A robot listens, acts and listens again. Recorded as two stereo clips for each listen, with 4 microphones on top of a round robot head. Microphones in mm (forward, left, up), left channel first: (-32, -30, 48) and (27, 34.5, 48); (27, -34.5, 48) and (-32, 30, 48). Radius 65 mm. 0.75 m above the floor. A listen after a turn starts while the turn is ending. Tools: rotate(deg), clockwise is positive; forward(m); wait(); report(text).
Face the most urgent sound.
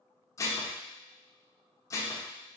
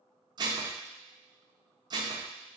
wait()
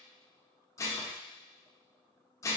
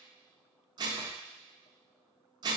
wait()
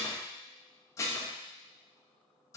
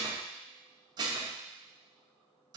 report("I can't make out anything urgent, only dishes clattering.")